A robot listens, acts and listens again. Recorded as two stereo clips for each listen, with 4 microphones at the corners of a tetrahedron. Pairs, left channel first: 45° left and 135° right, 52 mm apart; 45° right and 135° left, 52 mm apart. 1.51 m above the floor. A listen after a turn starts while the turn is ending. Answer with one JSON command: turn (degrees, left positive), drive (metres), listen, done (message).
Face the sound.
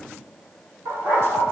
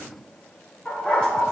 {"turn": -115}
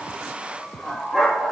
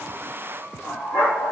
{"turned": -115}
{"turn": -45}
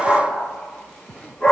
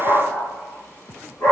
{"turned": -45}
{"turn": -20}
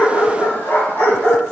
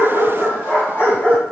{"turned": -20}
{"done": "Found it: a dog barking, straight ahead."}